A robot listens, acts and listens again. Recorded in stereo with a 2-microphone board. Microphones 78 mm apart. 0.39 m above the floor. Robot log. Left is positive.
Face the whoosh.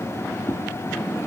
note: The whoosh: about 25° left or 155° left.
cmd yaw +25
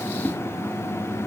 end: Found it: a whoosh, straight ahead.